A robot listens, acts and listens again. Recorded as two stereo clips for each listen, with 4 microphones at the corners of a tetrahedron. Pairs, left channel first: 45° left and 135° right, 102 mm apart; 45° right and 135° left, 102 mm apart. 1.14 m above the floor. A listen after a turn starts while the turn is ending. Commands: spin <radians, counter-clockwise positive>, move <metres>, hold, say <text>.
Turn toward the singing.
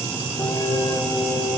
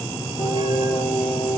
spin -0.35
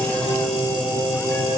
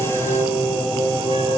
spin -0.17
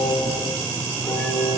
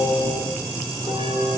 say Found it: singing, straight ahead.